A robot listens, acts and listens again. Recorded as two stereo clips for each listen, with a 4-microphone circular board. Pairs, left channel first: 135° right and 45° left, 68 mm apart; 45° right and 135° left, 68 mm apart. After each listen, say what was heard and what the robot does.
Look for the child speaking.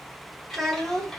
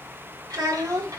The child speaking: 145° left. Turn 145° left.
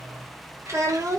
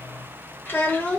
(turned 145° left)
The child speaking is now 15° left. Turn 15° left.
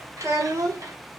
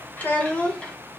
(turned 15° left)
The child speaking is now 25° left. Turn 25° left.
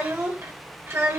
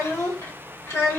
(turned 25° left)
Facing the child speaking.